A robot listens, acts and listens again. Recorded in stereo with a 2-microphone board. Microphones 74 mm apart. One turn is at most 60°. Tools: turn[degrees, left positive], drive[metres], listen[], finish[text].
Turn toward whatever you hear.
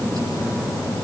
Action: listen[]
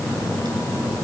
Action: listen[]
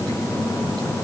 Action: finish[I can't make out anything.]